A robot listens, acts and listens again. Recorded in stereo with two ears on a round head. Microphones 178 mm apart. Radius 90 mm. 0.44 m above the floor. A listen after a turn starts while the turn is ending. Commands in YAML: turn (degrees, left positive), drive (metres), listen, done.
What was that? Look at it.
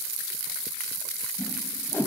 turn: 30
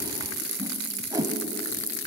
turn: -15
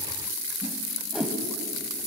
done: "Facing the whoosh."